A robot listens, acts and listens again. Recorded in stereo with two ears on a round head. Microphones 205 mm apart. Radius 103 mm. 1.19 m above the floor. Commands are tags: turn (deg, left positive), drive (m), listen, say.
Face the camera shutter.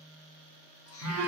<listen/>
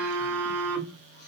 <listen/>
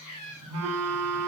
<say>I can't make out a camera shutter to turn to.</say>